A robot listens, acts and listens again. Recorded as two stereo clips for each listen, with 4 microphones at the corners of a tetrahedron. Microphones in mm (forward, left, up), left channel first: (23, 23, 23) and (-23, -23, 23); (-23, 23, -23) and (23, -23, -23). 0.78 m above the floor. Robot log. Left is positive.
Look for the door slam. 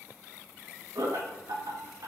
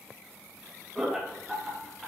cmd idle
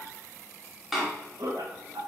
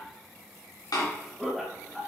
note: The door slam: 140° left.
cmd yaw +140
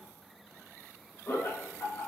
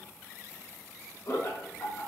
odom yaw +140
end: I heard a door slam from this way, but can't make it out now.